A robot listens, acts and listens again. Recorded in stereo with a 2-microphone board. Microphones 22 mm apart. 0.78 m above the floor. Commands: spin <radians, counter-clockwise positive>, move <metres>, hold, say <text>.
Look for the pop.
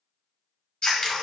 hold
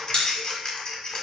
spin 0.70
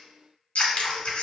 hold
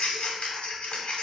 say I heard a pop, but can't make it out now. It was about straight ahead or 100° left.